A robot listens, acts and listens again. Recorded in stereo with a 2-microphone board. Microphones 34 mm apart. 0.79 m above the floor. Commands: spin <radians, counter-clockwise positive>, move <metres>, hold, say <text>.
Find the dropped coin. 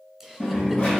spin 0.52
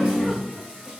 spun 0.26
spin 0.26
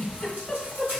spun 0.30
say I heard a dropped coin from this way, but can't make it out now.